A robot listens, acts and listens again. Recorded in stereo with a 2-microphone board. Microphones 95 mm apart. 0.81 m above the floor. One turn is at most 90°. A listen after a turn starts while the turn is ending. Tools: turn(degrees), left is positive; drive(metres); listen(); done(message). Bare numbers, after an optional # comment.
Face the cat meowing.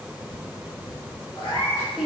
# The cat meowing: about 75° left or 105° left.
turn(75)
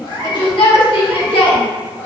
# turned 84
listen()
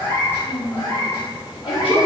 # So it is at 40° left.
turn(40)
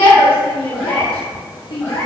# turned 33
# The cat meowing is now 25° left.
turn(25)
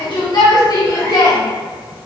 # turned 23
listen()
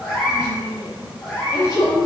done("Found it: a cat meowing, straight ahead.")